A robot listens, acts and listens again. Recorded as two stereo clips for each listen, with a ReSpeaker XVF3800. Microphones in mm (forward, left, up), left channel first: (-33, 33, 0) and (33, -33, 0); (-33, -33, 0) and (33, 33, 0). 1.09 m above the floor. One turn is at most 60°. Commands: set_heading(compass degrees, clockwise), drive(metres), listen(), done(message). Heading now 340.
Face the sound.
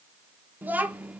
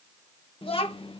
set_heading(40)
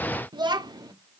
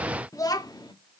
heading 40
set_heading(100)
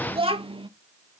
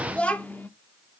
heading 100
set_heading(160)
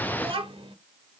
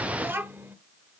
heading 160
set_heading(185)
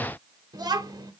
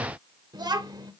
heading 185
done("Facing the child speaking.")